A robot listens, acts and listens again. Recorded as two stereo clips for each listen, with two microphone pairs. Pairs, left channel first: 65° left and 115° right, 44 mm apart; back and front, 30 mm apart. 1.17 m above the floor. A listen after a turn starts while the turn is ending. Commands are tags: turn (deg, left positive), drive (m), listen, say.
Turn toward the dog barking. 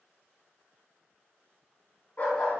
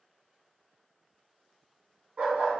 <turn deg="45"/>
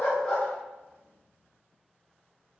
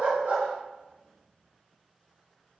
<say>Facing the dog barking, 2 to 4 m away.</say>